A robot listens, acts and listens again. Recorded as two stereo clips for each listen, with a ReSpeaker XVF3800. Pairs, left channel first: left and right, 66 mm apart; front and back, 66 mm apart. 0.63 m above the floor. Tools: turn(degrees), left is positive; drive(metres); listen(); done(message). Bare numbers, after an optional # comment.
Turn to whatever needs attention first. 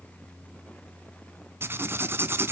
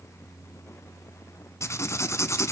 listen()
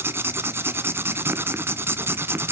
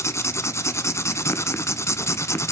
listen()
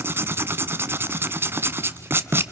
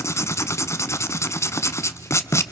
done("I can't make out anything urgent, only writing.")